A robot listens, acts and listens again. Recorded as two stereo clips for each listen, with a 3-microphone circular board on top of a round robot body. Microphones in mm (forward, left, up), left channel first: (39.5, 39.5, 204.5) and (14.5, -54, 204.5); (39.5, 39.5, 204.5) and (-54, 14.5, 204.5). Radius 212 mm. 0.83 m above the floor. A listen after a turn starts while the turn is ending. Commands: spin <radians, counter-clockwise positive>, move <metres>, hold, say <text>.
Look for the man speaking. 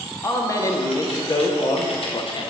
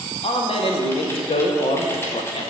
spin 0.61
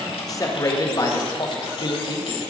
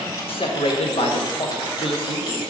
spin 0.70
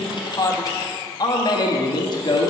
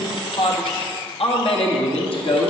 spin 0.61
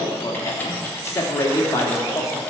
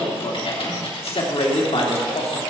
spin 0.26
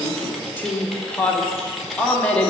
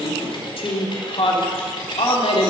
say Found it: a man speaking, straight ahead.